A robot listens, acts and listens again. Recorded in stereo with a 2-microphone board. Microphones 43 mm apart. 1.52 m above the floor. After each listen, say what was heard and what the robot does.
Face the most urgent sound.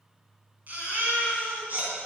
The baby crying: about 45° right or 135° right. Turn 45° right.
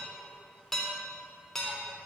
Keep listening.
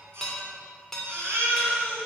So it is at 90° right. Turn 90° right.
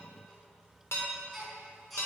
Found it: a baby crying, straight ahead, over 4 m away.